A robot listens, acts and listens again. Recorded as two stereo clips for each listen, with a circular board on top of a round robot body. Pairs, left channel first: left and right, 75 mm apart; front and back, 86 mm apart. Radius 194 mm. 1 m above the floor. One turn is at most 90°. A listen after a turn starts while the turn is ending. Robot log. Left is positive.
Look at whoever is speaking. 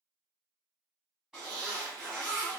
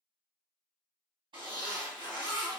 cmd idle
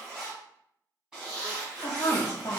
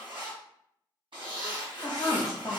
note: The woman speaking: 50° left.
cmd yaw +50
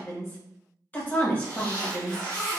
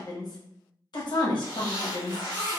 note: The woman speaking is now 25° left.
cmd yaw +25
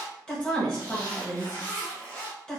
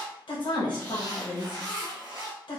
note: The woman speaking is now 10° left.
cmd yaw +10
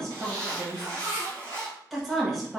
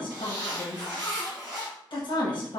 end: Found it: a woman speaking, straight ahead.